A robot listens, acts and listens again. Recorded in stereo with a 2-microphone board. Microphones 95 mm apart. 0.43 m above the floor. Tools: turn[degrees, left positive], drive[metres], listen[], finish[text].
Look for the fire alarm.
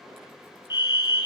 Thought: The fire alarm: about 45° left or 135° left.
Action: turn[45]
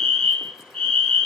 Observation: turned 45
Thought: So it is at 10° left.
Action: turn[10]
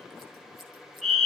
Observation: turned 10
Action: finish[Facing the fire alarm, 2 to 4 m away.]